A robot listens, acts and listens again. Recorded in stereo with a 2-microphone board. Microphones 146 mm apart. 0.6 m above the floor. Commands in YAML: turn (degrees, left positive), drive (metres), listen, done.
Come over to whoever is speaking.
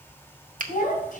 turn: 70
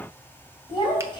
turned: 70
turn: 35
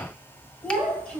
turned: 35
drive: 1.0
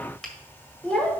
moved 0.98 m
turn: 10
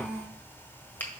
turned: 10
drive: 1.0
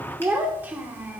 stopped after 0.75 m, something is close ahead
turn: -10
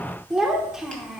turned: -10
done: "I am next to the child speaking."